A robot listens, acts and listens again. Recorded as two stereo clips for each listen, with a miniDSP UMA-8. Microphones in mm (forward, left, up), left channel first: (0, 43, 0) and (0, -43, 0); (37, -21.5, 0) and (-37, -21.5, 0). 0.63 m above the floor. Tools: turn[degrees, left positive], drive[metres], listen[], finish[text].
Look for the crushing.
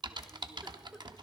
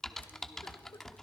Action: listen[]
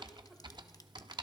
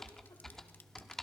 Action: listen[]
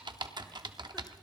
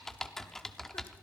Action: finish[I can't make out crushing, only typing on a keyboard.]